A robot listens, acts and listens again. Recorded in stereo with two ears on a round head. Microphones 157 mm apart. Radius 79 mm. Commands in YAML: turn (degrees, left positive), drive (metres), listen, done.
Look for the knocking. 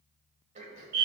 listen: true
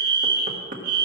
turn: -50
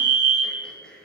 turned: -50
listen: true
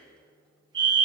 listen: true
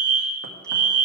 done: "I heard knocking, but can't make it out now. It was about straight ahead or 80° right."